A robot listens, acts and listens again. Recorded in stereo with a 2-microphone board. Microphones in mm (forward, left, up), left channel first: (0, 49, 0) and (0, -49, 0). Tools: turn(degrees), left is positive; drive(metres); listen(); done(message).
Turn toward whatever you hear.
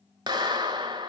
turn(degrees=-45)
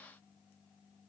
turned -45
listen()
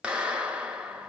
turn(degrees=-15)
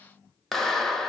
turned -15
done("Facing the clap.")